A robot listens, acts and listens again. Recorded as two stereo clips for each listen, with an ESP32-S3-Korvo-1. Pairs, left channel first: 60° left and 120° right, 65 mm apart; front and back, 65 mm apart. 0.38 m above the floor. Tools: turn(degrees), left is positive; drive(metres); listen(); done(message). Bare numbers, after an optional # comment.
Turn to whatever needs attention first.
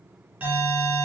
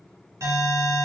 # The alarm: 170° right.
turn(-170)
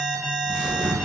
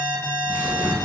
# The alarm is now 30° right.
turn(-30)
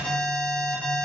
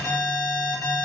done("Facing the alarm.")